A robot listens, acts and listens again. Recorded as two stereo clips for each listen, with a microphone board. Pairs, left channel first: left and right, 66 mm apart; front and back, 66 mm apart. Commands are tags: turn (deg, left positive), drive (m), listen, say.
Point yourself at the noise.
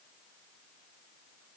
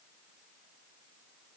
<listen/>
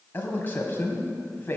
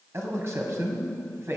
<turn deg="145"/>
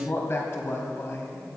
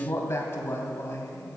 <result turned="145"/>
<turn deg="45"/>
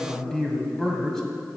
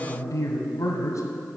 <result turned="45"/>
<turn deg="10"/>
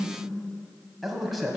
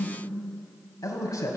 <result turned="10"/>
<say>Facing the man speaking.</say>